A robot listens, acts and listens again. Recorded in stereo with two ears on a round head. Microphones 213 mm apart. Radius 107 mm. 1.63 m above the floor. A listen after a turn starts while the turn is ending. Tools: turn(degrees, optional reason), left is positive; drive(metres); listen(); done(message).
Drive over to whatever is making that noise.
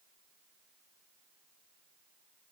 listen()
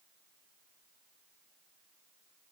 listen()
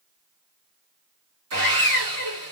turn(degrees=-60, reason="The sawing: about 60° right or 120° right.")
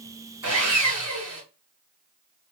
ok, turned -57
turn(degrees=-20, reason="So it is at 20° right.")
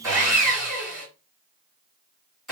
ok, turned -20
drive(metres=1.0)
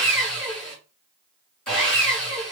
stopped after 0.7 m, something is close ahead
done("Arrived at the sawing, straight ahead.")